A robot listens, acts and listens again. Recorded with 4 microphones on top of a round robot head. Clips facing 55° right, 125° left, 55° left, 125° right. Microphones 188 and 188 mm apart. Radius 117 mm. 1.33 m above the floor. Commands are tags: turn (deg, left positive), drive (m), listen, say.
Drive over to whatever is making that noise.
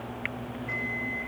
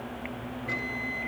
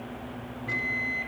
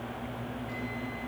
<turn deg="75"/>
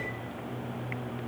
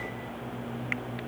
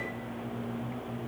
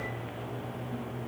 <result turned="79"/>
<listen/>
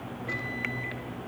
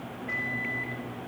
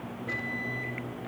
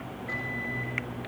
<drive m="1.0"/>
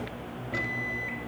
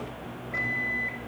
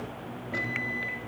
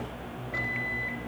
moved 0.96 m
<drive m="1.0"/>
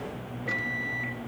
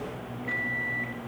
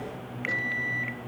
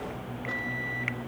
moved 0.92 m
<turn deg="-15"/>
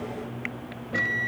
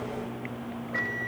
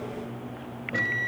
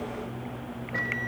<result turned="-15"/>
<drive m="1.0"/>
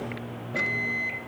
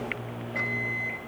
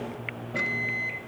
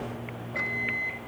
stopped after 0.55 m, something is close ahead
<say>Arrived at the microwave, straight ahead.</say>